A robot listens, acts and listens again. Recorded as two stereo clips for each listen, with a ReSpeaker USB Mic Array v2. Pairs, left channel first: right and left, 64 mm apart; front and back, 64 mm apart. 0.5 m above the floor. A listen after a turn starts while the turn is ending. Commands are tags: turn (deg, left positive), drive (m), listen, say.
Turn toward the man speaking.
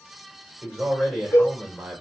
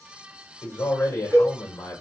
<turn deg="15"/>
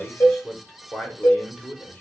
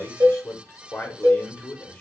<turn deg="-25"/>
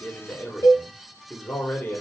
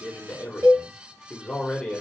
<turn deg="-75"/>
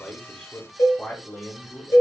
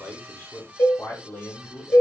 <turn deg="-30"/>
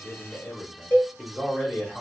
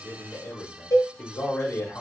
<turn deg="-10"/>
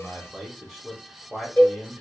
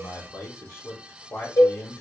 <say>Found it: a man speaking, straight ahead, 1 to 2 m away.</say>